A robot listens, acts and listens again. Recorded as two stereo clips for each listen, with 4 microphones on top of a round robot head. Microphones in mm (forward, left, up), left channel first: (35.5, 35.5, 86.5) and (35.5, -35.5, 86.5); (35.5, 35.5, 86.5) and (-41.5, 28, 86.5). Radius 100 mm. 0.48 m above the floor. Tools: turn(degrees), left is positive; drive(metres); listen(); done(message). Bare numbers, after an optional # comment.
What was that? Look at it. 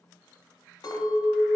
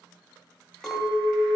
# The clink: 95° left.
turn(95)
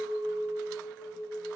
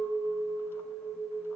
# The clink is now 20° left.
turn(20)
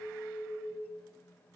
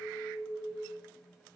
done("Found it: a clink, straight ahead.")